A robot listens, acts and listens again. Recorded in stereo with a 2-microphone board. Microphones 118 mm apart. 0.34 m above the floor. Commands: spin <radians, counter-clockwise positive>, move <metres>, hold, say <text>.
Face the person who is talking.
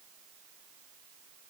hold
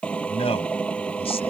spin 0.96
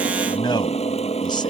spin 0.87
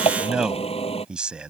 spin -0.17
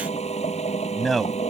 say Found it: a man speaking, straight ahead.